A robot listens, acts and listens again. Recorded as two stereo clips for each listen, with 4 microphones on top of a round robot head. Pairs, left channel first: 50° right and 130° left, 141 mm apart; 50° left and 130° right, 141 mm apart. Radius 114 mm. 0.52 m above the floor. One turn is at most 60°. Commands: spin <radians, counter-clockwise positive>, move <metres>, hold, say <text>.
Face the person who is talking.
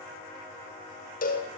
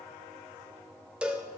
hold
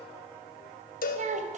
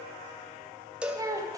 spin 1.05
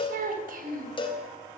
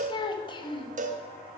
spin 1.05
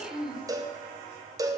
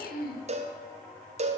spin 0.79
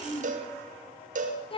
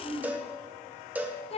say Facing the child speaking, 2 to 4 m away.